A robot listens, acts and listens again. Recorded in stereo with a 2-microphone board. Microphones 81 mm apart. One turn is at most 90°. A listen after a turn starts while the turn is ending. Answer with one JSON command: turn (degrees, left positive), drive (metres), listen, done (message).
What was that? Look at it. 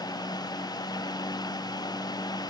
{"listen": true}
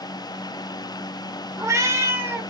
{"turn": -30}
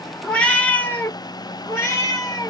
{"turn": 40}
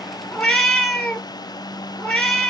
{"done": "Found it: a cat meowing, straight ahead."}